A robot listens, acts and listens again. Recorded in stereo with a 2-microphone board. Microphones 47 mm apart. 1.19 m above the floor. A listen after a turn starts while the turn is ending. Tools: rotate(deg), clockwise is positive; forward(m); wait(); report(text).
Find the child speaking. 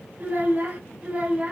rotate(30)
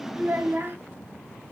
rotate(130)
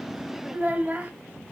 rotate(35)
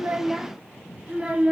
rotate(20)
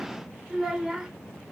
report("Found it: a child speaking, straight ahead.")